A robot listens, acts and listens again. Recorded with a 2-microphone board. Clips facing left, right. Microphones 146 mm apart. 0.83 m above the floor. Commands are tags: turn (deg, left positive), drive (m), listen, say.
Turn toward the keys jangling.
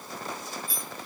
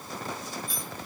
<turn deg="30"/>
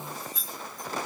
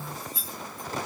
<turn deg="-30"/>
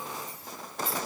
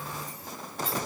<say>Facing the keys jangling, 2 to 4 m away.</say>